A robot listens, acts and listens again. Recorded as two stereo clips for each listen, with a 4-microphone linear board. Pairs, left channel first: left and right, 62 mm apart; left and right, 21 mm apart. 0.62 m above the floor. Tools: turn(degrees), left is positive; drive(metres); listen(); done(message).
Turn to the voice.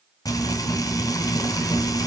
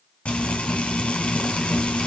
listen()
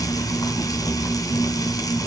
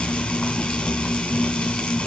listen()
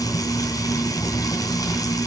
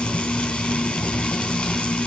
done("I can't make out anyone speaking, only frying.")